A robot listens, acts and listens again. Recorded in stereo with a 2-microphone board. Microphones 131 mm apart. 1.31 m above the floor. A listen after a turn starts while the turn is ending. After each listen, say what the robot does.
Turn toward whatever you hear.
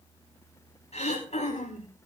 Turn 55° left.
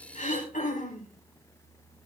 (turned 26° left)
Turn 100° left.
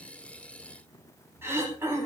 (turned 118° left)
Turn 20° right.
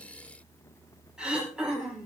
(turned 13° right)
Found it: throat clearing, straight ahead, over 4 m away.